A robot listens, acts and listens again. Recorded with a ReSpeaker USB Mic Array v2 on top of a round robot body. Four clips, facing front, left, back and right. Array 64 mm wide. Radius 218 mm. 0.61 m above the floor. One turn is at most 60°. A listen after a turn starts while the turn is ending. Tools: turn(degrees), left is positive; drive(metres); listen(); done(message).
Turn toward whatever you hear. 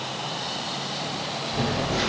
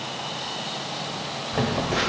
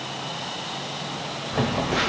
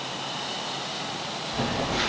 turn(degrees=60)
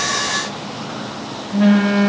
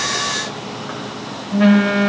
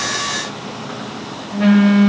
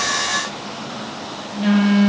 turn(degrees=60)
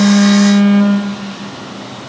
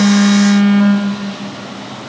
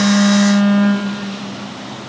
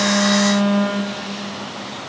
turn(degrees=40)
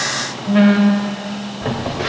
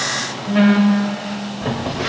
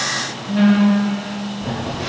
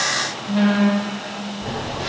turn(degrees=25)
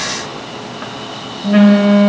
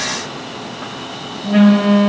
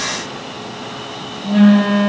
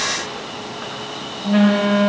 done("Found it: a phone buzzing, straight ahead, 2 to 4 m away.")